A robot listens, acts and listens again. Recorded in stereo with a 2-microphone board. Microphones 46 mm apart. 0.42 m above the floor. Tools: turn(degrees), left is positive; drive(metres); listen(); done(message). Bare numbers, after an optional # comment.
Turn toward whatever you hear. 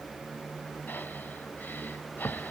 # The breathing: about 45° left or 135° left.
turn(45)
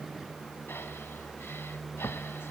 # So it is at 80° left.
turn(80)
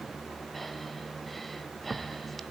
done("Found it: breathing, straight ahead, 1 to 2 m away.")